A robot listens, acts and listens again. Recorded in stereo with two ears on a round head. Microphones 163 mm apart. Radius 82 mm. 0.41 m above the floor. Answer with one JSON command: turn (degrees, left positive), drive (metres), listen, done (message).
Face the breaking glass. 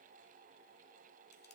{"listen": true}
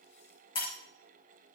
{"turn": 30}
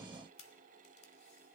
{"listen": true}
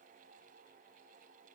{"done": "I heard breaking glass, but can't make it out now. It was about straight ahead or 120° left."}